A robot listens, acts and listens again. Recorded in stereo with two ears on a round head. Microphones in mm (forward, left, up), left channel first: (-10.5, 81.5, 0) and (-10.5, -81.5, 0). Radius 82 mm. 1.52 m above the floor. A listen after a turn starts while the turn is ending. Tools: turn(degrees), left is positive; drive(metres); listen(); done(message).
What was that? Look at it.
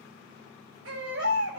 turn(degrees=-90)
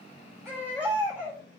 turn(degrees=-10)
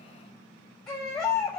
done("Found it: a baby crying, straight ahead.")